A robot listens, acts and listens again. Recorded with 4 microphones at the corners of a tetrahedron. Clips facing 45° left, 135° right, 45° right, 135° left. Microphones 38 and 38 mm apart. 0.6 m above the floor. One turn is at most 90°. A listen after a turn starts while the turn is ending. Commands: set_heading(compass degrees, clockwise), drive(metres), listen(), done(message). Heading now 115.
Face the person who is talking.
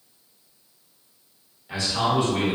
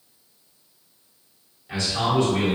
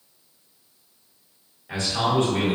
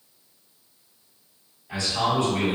set_heading(150)
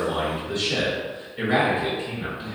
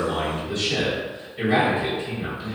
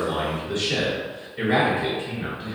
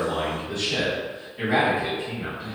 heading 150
set_heading(165)
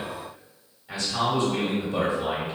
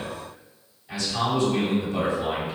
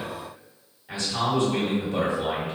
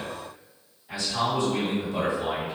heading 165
done("Facing the man speaking.")